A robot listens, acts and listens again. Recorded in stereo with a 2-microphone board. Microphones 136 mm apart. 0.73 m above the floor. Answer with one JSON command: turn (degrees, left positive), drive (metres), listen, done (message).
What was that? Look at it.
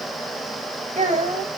{"turn": -65}
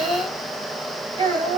{"turn": -35}
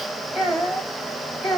{"done": "Found it: a child speaking, straight ahead."}